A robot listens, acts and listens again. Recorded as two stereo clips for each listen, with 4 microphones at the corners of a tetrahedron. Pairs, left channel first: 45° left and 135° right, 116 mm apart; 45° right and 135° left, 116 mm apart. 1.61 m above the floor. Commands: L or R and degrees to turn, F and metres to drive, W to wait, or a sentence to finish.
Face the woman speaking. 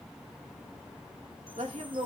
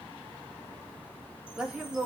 R140
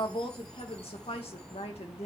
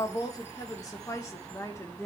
L20
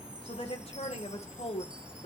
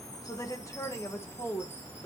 L30
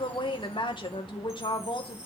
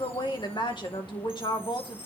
Found it: a woman speaking, straight ahead, 2 to 4 m away.